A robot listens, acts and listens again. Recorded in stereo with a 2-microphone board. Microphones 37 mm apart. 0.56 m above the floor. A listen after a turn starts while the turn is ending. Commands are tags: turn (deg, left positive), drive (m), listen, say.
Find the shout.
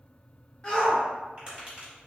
<turn deg="20"/>
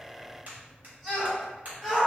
<say>Facing the shout, 1 to 2 m away.</say>